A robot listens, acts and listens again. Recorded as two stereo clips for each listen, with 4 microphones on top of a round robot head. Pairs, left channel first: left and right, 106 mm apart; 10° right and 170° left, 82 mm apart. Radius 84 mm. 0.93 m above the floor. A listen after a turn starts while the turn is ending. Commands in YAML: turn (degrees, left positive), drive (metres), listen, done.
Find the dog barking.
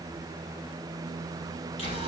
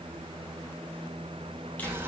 listen: true
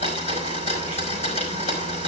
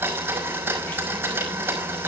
listen: true
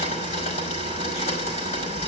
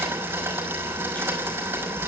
done: "I can't make out a dog barking to turn to."